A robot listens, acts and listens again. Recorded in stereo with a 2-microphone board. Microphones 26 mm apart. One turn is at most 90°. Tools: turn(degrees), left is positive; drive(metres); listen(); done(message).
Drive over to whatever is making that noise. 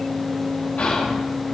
turn(degrees=90)
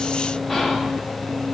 drive(metres=1.0)
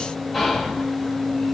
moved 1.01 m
drive(metres=1.0)
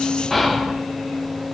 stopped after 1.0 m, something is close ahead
done("I am next to the whispering.")